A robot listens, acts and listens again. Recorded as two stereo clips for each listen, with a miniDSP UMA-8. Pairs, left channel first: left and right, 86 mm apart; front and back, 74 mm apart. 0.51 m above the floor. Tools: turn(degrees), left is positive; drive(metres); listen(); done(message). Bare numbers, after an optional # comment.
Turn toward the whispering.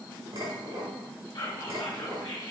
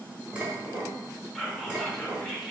# The whispering: 90° left.
turn(90)
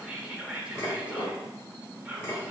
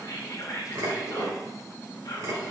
# The whispering is now 15° right.
turn(-15)
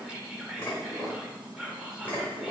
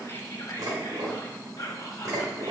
# The whispering is now 10° right.
turn(-10)
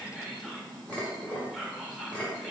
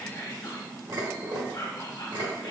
done("Found it: whispering, straight ahead, 1 to 2 m away.")